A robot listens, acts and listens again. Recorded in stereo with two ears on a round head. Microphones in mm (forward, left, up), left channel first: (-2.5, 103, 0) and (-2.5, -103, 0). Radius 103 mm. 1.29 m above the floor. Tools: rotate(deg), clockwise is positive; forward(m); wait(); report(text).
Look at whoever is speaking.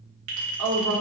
rotate(70)
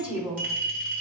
rotate(10)
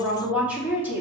rotate(10)
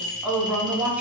report("Facing the woman speaking, 2 to 4 m away.")